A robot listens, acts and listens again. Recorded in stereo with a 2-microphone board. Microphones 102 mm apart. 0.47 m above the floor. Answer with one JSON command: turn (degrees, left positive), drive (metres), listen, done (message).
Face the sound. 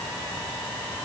{"listen": true}
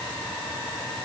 {"listen": true}
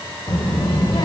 {"turn": 45}
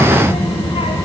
{"turn": 90}
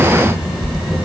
{"done": "Found it: a child speaking, straight ahead."}